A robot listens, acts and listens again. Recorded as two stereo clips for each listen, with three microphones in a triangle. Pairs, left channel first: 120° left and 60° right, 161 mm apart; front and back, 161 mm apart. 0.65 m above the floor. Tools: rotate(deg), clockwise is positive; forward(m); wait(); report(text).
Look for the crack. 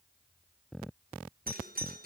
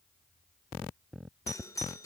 wait()
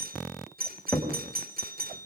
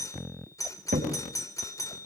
rotate(160)
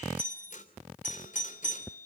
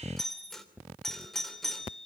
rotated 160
report("I heard a crack from this way, but can't make it out now.")